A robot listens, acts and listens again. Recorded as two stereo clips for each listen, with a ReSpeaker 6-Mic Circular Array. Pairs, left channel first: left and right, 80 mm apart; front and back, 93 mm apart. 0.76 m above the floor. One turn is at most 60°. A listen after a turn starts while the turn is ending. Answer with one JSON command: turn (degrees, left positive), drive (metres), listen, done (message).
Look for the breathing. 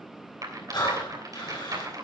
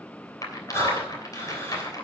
{"turn": 60}
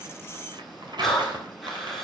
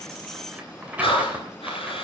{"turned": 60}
{"done": "Found it: breathing, straight ahead."}